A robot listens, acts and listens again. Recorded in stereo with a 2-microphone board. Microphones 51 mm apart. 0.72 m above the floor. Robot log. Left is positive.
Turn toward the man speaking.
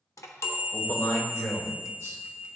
note: The man speaking: about 70° left or 110° left.
cmd yaw +70
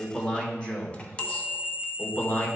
note: So it is at 40° left.
cmd yaw +40
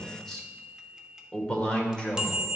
note: The man speaking is now 20° left.
cmd yaw +20
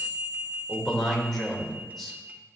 end: Facing the man speaking.